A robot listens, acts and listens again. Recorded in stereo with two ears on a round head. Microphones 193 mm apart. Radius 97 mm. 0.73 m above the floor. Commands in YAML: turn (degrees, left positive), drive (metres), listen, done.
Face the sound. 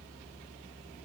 listen: true
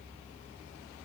listen: true
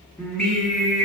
turn: 30
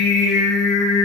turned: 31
turn: 145
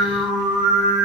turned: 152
done: "Found it: singing, straight ahead."